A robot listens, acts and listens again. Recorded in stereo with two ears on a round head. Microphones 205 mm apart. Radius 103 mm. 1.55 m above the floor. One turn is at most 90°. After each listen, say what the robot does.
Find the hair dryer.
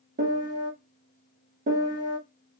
Keep listening.
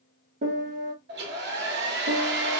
Turn 45° right.
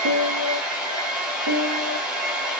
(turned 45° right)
Facing the hair dryer, under 1 m away.